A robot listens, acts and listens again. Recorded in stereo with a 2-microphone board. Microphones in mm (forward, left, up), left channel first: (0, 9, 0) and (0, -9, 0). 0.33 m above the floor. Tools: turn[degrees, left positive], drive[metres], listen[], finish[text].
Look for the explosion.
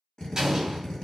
Thought: The explosion: about 30° right or 150° right.
Action: turn[-30]
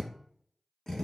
Action: listen[]
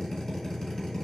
Action: finish[I heard an explosion, but can't make it out now. It was about straight ahead or 120° right.]